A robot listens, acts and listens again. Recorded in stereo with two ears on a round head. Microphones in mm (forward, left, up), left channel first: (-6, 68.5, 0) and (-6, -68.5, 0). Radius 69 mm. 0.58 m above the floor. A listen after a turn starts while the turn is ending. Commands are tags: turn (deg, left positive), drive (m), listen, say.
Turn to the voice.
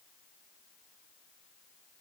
<listen/>
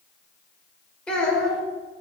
<turn deg="30"/>
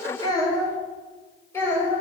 <turn deg="15"/>
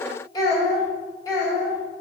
<turn deg="160"/>
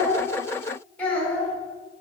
<turn deg="10"/>
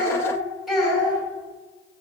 <say>Facing the child speaking, 2 to 4 m away.</say>